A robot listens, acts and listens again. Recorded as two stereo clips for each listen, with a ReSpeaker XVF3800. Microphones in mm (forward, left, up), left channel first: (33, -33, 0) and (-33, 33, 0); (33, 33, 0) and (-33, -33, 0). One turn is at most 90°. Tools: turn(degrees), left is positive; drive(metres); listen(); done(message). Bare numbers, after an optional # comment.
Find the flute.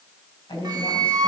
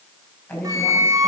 # The flute: straight behind.
turn(90)
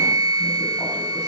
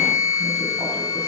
# The flute is now 100° left.
turn(90)
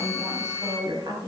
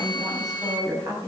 # The flute is now 15° left.
turn(15)
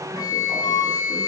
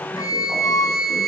done("Facing the flute.")